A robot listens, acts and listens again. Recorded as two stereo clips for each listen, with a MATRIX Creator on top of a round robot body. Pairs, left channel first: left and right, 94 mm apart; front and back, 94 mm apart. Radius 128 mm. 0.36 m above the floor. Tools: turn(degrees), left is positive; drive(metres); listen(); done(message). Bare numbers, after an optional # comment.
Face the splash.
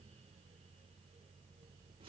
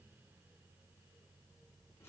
listen()
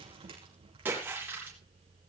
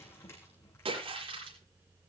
# The splash: 160° right.
turn(-160)
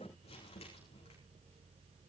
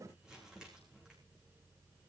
done("I heard a splash from this way, but can't make it out now.")